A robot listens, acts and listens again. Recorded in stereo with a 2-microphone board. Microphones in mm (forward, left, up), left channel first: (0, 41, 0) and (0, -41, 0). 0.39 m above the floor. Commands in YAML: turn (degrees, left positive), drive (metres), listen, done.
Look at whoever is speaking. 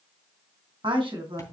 turn: -70
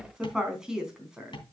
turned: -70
done: "Facing the woman speaking, 2 to 4 m away."